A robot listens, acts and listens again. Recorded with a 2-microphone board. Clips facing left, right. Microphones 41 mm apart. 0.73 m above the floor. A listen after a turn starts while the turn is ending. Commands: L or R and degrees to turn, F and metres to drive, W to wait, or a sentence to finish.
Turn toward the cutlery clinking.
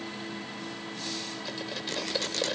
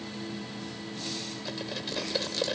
L30
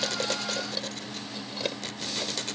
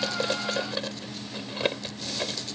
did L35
R35
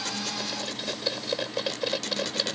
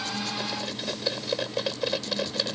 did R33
Facing the cutlery clinking.